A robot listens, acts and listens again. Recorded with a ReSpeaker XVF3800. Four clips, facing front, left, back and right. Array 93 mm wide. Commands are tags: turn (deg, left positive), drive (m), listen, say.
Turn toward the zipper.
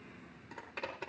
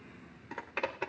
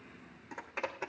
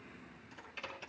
<turn deg="105"/>
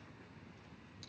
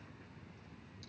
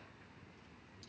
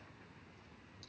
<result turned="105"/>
<listen/>
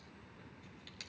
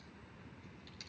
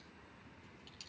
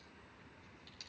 <say>Facing the zipper.</say>